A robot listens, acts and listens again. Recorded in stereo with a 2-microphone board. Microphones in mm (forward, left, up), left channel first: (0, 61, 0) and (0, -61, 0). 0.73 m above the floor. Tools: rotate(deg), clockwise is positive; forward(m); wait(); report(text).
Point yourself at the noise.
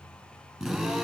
rotate(-30)
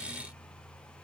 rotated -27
wait()
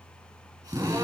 rotate(30)
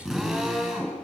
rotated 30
report("Found it: a drill, straight ahead, over 4 m away.")